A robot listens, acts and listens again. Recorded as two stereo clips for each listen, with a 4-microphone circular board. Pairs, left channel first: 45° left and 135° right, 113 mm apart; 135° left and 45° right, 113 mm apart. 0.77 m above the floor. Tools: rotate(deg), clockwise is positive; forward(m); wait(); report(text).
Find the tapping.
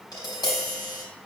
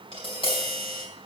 rotate(-100)
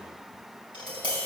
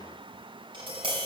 report("Found it: tapping, straight ahead, 2 to 4 m away.")